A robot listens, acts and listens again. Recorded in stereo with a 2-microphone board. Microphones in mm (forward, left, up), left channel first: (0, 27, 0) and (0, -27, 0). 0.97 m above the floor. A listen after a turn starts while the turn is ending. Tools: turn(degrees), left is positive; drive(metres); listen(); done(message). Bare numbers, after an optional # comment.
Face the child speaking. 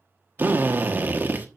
listen()
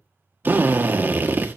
listen()
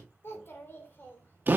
# The child speaking: about 40° left or 140° left.
turn(40)
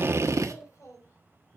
# So it is at 115° left.
turn(115)
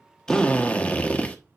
listen()
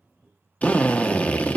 done("Facing the child speaking.")